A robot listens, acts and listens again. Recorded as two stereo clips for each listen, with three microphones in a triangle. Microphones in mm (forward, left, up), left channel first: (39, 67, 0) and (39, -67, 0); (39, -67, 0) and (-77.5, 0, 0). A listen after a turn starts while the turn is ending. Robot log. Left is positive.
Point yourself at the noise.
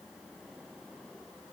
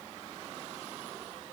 cmd idle
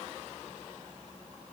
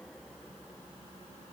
cmd idle
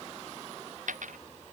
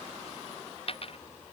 note: The dropped coin: 75° right.
cmd yaw -75
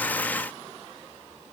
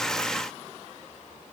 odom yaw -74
end: Facing where the dropped coin came from. I can't hear it now.